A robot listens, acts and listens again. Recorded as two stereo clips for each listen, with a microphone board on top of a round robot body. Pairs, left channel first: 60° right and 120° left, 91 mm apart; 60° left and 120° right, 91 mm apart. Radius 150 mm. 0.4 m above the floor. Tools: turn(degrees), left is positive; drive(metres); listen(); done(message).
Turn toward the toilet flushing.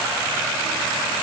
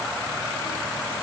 listen()
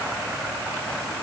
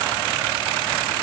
listen()
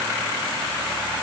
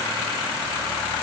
done("I can't make out a toilet flushing to turn to.")